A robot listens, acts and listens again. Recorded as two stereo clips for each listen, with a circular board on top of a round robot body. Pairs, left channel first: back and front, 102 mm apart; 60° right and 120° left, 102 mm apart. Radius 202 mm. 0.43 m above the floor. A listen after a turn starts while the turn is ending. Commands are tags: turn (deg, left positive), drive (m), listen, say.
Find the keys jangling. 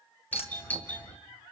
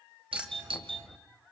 <turn deg="-155"/>
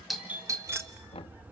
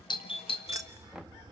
<turn deg="75"/>
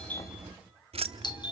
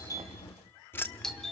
<turn deg="15"/>
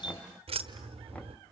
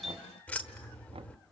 <turn deg="15"/>
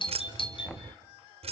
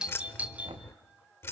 <say>Facing the keys jangling, 1 to 2 m away.</say>